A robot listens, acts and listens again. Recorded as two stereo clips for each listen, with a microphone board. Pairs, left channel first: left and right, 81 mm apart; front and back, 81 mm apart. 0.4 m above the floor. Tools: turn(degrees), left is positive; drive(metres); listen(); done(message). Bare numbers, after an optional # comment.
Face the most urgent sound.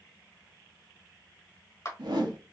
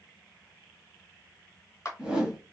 listen()
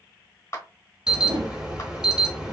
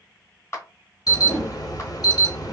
# The alarm: 10° right.
turn(-10)
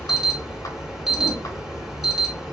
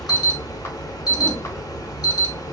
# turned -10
done("Found it: an alarm, straight ahead.")